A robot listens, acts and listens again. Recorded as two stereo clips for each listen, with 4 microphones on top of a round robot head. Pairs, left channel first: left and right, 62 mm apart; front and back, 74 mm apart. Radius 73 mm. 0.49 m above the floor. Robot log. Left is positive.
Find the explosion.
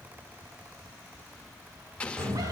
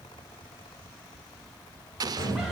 note: The explosion: 160° left.
cmd yaw +160
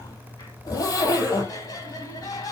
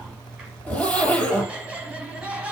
end: Facing where the explosion came from. I can't hear it now.